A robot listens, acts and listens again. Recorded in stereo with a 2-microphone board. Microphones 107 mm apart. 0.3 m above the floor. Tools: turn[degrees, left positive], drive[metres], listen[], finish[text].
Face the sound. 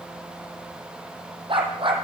Thought: The dog barking: about 50° right or 130° right.
Action: turn[-50]
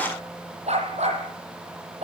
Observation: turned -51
Thought: So it is at 85° right.
Action: turn[-85]
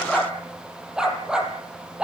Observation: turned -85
Thought: The dog barking is now 10° right.
Action: turn[-10]
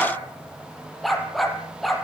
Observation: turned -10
Action: finish[Facing the dog barking, over 4 m away.]